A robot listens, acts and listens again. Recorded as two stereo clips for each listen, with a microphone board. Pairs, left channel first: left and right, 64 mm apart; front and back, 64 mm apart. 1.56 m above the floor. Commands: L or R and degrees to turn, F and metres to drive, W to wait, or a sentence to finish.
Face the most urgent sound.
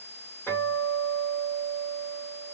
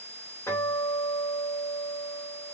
W
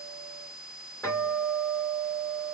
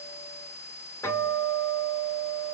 W
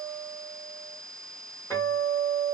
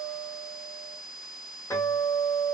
I can't make out anything urgent, only a guitar.